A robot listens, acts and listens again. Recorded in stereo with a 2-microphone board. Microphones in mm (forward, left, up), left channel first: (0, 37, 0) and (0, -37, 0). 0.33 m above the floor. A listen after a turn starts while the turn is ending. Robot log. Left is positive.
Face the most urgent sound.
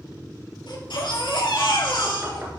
cmd yaw +90
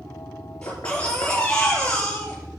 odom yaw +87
note: So it is at 15° left.
cmd yaw +15
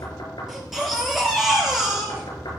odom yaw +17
end: Facing the baby crying, over 4 m away.